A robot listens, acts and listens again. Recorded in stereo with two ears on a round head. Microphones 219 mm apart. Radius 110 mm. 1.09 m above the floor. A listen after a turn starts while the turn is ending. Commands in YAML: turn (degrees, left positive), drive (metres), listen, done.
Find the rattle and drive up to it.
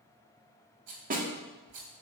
turn: -75
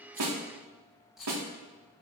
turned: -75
drive: 1.0
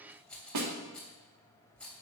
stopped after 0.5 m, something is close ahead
done: "Something is in my way. I am facing the rattle but have not reached it."